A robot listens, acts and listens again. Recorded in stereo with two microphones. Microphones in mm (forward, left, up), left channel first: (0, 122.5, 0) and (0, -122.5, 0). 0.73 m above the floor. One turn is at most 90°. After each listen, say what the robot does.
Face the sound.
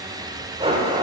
Turn 20° right.
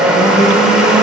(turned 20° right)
Facing the blender, 1 to 2 m away.